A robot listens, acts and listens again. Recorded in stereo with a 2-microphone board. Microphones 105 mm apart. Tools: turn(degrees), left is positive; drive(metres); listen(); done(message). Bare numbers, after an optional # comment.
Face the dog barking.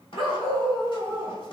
# The dog barking: about 55° left or 125° left.
turn(55)
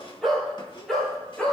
done("Found it: a dog barking, straight ahead, 2 to 4 m away.")